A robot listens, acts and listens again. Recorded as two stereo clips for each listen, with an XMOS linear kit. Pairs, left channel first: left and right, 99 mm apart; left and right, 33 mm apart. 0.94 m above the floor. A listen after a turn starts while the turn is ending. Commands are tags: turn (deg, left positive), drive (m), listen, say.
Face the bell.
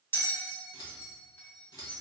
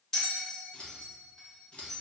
<turn deg="20"/>
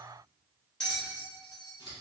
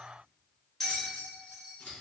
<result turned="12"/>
<turn deg="10"/>
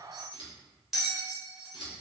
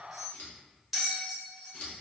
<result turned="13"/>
<say>Facing the bell.</say>